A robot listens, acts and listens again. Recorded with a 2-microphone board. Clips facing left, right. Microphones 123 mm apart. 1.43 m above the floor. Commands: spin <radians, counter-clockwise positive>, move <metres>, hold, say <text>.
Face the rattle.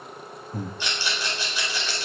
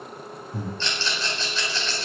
spin 0.52
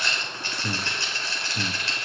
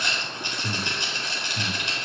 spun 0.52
spin -0.35
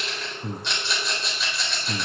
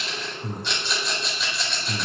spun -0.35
say Facing the rattle.